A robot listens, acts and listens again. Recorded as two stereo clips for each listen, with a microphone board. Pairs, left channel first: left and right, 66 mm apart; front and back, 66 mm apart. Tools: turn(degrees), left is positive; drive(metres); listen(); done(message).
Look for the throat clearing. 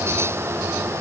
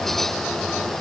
listen()
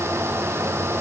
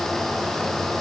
listen()
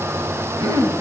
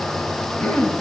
turn(degrees=-70)
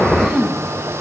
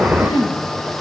done("Found it: throat clearing, straight ahead, 1 to 2 m away.")